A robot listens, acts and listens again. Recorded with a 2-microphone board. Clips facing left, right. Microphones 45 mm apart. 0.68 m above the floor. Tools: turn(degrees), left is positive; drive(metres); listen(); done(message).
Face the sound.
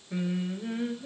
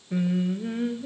turn(degrees=-30)
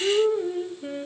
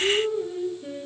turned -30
turn(degrees=25)
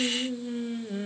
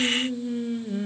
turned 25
done("Found it: singing, straight ahead.")